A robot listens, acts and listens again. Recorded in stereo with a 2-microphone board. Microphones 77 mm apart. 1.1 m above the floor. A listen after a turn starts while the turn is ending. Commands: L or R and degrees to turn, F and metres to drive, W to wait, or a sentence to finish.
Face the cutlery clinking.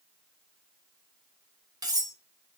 R60
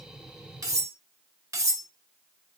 R45
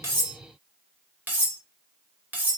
R25
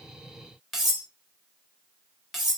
Found it: cutlery clinking, straight ahead.